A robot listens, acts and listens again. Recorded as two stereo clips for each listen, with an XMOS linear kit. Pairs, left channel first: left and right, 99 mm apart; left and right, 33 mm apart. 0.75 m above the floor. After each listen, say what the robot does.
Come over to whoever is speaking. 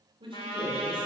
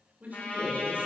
Turn 65° right.
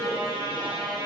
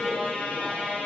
Turn 40° right.
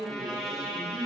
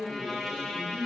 Drive 1.0 m forward.
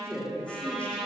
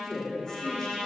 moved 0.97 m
Turn 15° left.
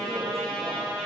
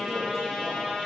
Keep listening.
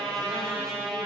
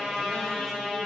Keep listening.
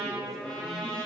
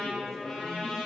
I heard a man speaking from this way, but can't make it out now. I did not reach it.